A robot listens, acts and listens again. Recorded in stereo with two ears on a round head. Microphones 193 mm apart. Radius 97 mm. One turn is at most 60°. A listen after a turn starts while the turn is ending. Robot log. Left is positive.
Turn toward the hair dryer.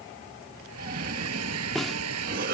cmd yaw -60
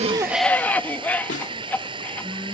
note: So it is at 25° right.
cmd yaw -25
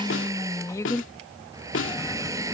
note: The hair dryer is now 15° right.
cmd yaw -15
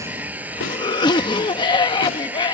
note: The hair dryer is now 10° right.
cmd yaw -10
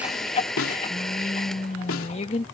end: Found it: a hair dryer, straight ahead.